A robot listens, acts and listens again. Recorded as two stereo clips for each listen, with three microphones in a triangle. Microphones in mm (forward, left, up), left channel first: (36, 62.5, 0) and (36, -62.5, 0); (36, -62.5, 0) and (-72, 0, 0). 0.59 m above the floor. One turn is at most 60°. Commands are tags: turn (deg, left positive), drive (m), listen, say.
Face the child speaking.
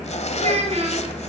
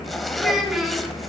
<turn deg="-60"/>
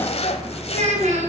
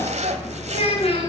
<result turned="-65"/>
<turn deg="-60"/>
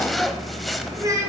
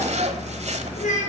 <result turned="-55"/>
<turn deg="-25"/>
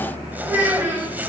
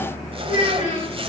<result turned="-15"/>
<turn deg="-15"/>
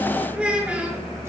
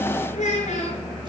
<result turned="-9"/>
<turn deg="-10"/>
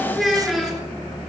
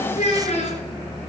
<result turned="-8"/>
<say>Facing the child speaking.</say>